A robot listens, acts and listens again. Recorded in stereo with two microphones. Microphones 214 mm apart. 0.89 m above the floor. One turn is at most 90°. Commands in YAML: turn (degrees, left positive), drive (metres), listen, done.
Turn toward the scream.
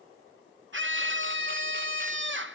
turn: -60
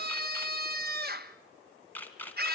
turn: -50
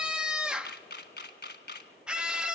done: "Facing the scream."